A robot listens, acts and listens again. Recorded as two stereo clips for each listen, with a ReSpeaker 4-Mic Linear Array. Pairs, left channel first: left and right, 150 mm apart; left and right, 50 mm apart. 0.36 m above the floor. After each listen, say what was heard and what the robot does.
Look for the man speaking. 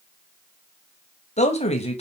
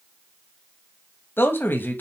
The man speaking: about 40° left or 140° left. Turn 40° left.
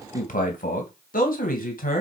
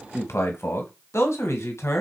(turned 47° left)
So it is at 115° left. Turn 115° left.
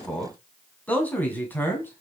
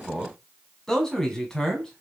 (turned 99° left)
The man speaking is now 15° left. Turn 15° left.
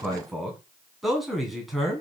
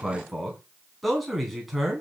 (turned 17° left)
Found it: a man speaking, straight ahead, 2 to 4 m away.